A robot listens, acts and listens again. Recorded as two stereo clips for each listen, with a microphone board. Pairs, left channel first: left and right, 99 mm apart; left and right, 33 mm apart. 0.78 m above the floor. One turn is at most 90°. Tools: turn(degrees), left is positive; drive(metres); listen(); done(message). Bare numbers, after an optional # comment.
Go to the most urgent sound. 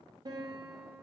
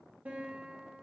listen()
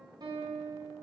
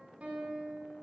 listen()
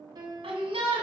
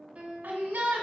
turn(-90)
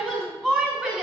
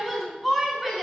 drive(1.0)
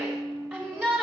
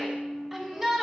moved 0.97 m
drive(1.0)
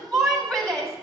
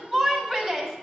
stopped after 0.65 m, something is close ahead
done("I am next to the shout.")